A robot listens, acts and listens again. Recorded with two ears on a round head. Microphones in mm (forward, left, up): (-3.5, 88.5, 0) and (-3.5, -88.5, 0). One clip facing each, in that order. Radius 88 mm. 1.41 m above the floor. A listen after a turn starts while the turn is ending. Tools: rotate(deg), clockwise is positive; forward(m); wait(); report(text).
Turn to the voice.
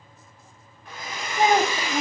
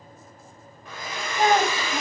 rotate(-30)
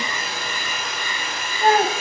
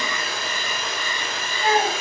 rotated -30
rotate(-130)
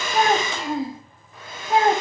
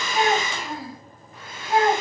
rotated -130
rotate(-25)
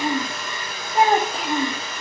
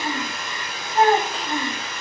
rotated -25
rotate(-10)
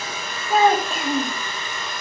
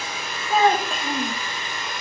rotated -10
report("Found it: a child speaking, straight ahead, 1 to 2 m away.")